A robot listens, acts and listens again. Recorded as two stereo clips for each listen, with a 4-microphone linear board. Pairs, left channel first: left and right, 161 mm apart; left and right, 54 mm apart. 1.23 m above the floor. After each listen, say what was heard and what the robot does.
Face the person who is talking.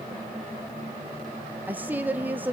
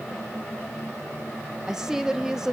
Turn 30° right.
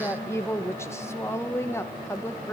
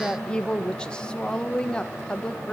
So it is at 15° left. Turn 15° left.
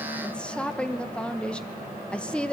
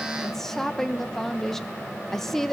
Found it: a woman speaking, straight ahead.